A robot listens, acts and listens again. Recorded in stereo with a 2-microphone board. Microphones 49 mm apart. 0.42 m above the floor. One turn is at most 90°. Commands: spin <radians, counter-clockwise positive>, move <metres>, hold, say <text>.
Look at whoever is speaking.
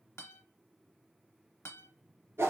hold
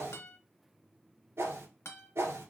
hold
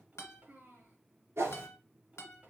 spin -0.61
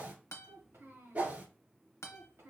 spin -1.57
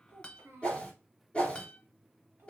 spin -0.96
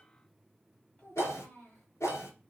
spin 0.44
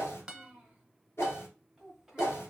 spin -0.17
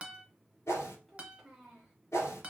say Found it: a child speaking, straight ahead.